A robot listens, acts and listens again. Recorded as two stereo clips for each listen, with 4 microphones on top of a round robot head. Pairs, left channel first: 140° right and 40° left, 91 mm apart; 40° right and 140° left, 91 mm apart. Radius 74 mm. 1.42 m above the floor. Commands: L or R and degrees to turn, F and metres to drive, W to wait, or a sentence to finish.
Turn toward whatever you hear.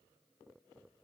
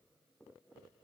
W
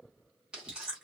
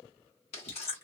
R40
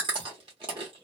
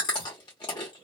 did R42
Found it: chewing, straight ahead, under 1 m away.